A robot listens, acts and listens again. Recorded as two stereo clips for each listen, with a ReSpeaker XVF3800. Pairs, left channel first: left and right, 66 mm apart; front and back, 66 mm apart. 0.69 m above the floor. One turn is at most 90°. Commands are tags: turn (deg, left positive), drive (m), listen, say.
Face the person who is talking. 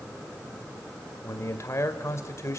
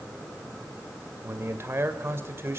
<turn deg="90"/>
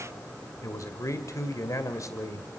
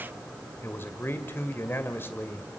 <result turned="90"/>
<turn deg="55"/>
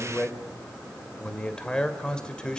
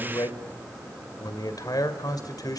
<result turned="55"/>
<turn deg="15"/>
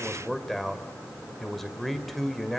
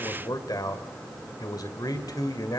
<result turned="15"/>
<say>Found it: a man speaking, straight ahead.</say>